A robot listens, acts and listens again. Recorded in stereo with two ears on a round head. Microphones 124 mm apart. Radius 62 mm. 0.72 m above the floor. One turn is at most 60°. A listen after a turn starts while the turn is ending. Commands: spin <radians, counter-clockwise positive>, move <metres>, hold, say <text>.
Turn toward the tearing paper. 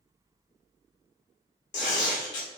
spin 0.96
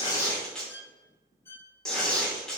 say Facing the tearing paper.